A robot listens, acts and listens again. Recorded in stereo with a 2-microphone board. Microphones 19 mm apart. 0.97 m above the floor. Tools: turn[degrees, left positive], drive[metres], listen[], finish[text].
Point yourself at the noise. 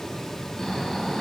Thought: The snoring: about 30° left or 150° left.
Action: turn[30]
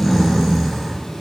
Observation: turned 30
Action: finish[Facing the snoring, 2 to 4 m away.]